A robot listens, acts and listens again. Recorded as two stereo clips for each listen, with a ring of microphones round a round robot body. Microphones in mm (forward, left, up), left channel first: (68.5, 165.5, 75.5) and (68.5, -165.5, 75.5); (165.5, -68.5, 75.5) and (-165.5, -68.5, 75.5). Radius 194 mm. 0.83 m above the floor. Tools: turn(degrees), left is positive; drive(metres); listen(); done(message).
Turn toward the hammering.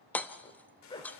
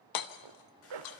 done("Found it: hammering, straight ahead, 1 to 2 m away.")